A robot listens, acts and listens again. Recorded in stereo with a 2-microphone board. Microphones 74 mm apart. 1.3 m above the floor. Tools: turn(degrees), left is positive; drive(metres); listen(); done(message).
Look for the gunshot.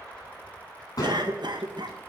turn(degrees=60)
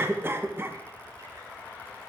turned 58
listen()
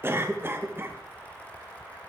done("I heard a gunshot, but can't make it out now. It was about straight ahead or 60° left.")